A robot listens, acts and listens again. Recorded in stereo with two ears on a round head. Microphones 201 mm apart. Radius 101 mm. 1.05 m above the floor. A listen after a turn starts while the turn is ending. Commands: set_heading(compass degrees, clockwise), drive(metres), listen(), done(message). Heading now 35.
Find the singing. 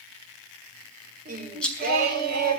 set_heading(80)
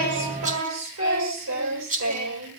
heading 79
set_heading(174)
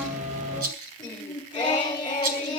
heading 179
set_heading(159)
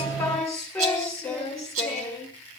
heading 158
done("Found it: singing, straight ahead.")